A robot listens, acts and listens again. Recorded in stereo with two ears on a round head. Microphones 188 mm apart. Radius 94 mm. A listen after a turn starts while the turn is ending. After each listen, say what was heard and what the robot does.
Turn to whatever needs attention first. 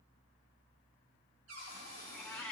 Keep listening.
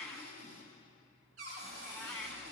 Keep listening.
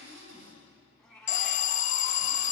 The alarm: about 40° left or 140° left. Turn 40° left.
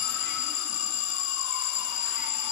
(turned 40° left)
So it is at 100° left. Turn 100° left.
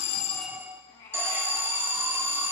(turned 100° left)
The alarm is now 10° right. Turn 10° right.
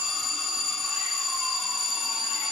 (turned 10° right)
Found it: an alarm, straight ahead, under 1 m away.